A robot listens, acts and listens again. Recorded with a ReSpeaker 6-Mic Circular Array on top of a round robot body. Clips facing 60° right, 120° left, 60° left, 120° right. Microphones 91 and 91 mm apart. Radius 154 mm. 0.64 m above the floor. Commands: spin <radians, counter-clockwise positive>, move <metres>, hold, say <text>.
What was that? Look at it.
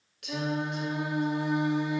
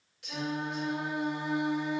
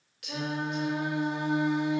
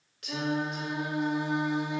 spin -1.40
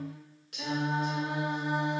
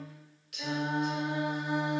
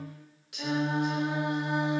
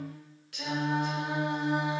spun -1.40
spin -0.26
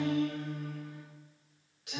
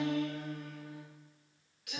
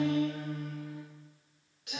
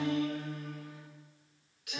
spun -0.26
say Facing the singing.